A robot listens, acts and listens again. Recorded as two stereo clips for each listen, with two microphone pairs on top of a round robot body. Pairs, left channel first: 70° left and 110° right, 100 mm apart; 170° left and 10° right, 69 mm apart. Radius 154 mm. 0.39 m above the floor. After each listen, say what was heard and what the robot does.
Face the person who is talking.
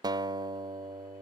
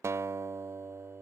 Keep listening.
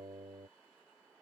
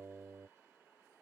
Keep listening.
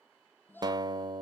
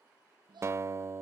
Facing the child speaking.